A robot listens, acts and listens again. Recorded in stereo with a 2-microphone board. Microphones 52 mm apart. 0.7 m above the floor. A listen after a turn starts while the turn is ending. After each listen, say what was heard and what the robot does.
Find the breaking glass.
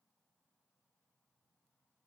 Keep listening.
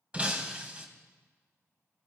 The breaking glass: about 20° right or 160° right. Turn 20° right.
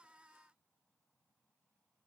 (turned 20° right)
Keep listening.
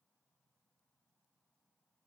I heard breaking glass, but can't make it out now. It was about straight ahead or 140° right.